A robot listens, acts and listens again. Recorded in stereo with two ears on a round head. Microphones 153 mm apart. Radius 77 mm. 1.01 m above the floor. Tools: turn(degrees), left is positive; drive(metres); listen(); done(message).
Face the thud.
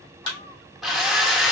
turn(degrees=30)
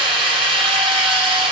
listen()
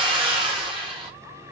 done("I heard a thud, but can't make it out now. It was about straight ahead or 120° left.")